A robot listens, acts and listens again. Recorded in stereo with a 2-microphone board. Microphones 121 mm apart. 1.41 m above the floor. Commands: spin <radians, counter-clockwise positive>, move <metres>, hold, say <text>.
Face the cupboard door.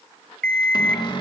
spin 0.70
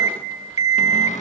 spin 1.75
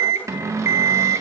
spin -0.44
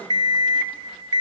hold
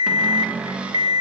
spin -0.17
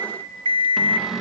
say Facing the cupboard door, 2 to 4 m away.